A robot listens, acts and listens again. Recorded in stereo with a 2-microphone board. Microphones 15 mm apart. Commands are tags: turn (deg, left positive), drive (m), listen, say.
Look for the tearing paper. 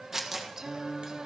<turn deg="-30"/>
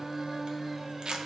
<turn deg="-120"/>
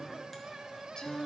<listen/>
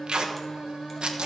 <turn deg="-55"/>
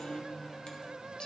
<listen/>
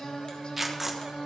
<say>Found it: tearing paper, straight ahead, 1 to 2 m away.</say>